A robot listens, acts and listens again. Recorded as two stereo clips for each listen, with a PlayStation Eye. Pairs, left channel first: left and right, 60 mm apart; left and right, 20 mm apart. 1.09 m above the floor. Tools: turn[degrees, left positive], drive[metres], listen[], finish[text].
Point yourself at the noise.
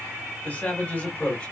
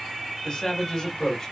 Thought: The man speaking: about 25° left or 155° left.
Action: turn[25]
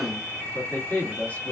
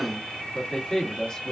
Thought: The man speaking: about 25° left or 155° left.
Action: turn[25]
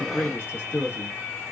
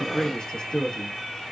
Thought: The man speaking: about 35° left or 145° left.
Action: turn[35]
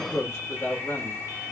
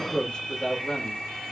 Thought: So it is at 130° left.
Action: turn[130]
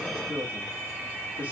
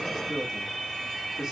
Thought: The man speaking is now 30° right.
Action: turn[-30]
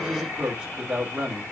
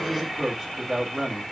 Thought: The man speaking is now 20° right.
Action: turn[-20]
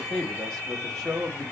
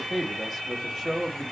Action: finish[Facing the man speaking.]